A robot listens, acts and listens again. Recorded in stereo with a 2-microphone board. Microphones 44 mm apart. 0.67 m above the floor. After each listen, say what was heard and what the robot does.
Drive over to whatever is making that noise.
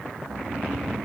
Turn 30° left.
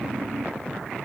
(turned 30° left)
So it is at 135° left. Turn 135° left.
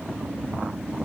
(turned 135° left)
The snoring is now 55° left. Turn 55° left.
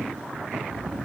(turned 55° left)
Drive 1.0 m forward.
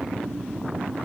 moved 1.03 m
The snoring is now 10° right. Turn 10° right.
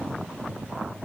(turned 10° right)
Keep listening.
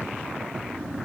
Drive 1.0 m forward.
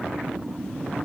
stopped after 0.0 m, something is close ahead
I am next to the snoring.